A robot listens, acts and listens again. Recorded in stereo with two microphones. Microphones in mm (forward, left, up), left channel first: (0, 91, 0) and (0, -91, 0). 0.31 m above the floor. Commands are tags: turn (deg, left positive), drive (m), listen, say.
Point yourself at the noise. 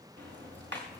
<turn deg="-90"/>
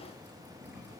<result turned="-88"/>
<turn deg="-10"/>
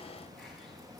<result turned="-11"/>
<say>Found it: ticking, straight ahead.</say>